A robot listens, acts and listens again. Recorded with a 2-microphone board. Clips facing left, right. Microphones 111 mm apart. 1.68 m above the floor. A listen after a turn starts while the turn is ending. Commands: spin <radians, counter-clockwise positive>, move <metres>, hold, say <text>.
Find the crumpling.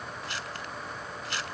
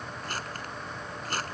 spin -0.79
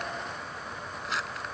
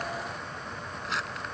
say Found it: crumpling, straight ahead.